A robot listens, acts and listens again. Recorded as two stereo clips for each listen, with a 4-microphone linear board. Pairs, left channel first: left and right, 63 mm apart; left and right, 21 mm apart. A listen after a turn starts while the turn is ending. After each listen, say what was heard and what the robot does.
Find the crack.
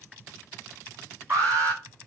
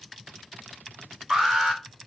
Keep listening.
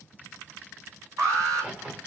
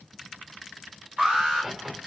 The crack: about 30° right or 150° right. Turn 30° right.
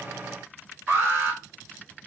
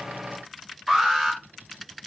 Keep listening.
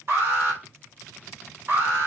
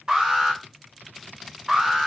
I heard a crack, but can't make it out now. It was about straight ahead or 120° right.